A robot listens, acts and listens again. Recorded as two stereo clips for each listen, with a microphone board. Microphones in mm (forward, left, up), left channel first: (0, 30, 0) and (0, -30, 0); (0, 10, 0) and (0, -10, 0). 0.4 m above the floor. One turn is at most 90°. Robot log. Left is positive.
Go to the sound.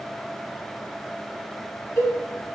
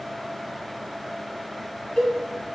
note: The cowbell: about 65° left or 115° left.
cmd yaw +65
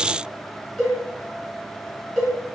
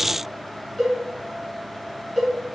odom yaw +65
cmd fwd 1.0
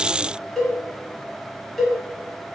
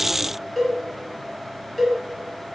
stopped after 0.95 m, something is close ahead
end: I am next to the cowbell.